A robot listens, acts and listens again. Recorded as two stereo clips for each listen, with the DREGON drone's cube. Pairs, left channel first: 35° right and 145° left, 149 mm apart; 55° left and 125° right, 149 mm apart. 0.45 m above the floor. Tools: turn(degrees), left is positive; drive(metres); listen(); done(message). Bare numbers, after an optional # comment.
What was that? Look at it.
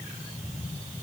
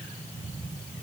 listen()
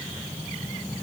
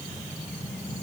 listen()
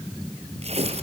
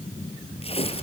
# The tearing paper: 100° left.
turn(100)
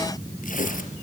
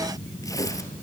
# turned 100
# The tearing paper is now 10° right.
turn(-10)
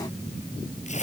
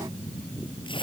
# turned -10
done("Facing the tearing paper, 2 to 4 m away.")